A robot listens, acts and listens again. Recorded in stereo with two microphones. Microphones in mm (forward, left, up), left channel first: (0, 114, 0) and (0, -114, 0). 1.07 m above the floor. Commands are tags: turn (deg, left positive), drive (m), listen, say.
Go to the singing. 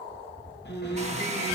<turn deg="30"/>
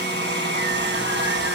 <listen/>
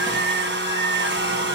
<turn deg="120"/>
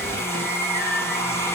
<turn deg="-10"/>
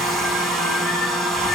<listen/>
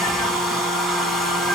<listen/>
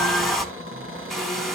<say>I heard singing from this way, but can't make it out now. I did not reach it.</say>